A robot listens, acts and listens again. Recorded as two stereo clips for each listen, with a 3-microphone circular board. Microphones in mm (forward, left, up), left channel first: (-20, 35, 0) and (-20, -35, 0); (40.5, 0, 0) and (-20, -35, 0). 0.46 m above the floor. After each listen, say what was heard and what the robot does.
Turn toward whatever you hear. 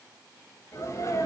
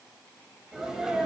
The sneeze: 125° left. Turn 125° left.
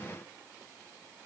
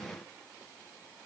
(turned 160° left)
Nothing new. It was at 35° right. Turn 35° right.
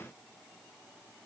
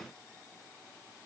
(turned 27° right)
Facing where the sneeze came from. I can't hear it now.